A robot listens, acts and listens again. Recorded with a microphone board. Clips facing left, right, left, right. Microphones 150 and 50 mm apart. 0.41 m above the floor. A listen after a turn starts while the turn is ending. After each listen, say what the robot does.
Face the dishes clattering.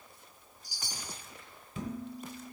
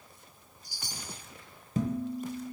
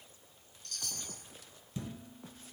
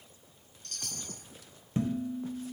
Turn 45° right.
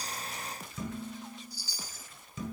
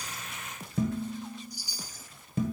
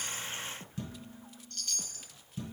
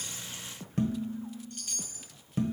Turn 80° right.
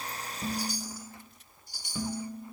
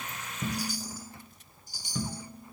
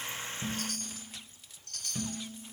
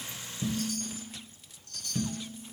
Turn 10° left.
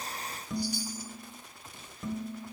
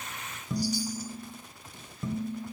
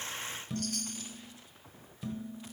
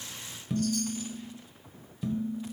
Found it: dishes clattering, straight ahead, 1 to 2 m away.